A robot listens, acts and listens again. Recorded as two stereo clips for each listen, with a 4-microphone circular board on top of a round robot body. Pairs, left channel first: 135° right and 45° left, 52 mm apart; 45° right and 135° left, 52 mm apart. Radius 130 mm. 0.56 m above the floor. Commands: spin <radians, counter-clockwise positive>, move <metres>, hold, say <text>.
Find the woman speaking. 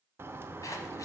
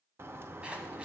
hold
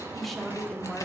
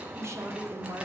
spin 2.44
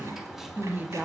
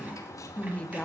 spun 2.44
spin 0.26
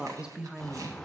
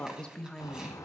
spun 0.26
spin 0.26
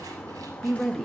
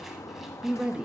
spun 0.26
spin 2.44
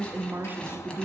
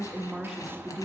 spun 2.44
spin 0.79
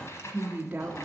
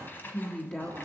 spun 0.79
say Found it: a woman speaking, straight ahead, 1 to 2 m away.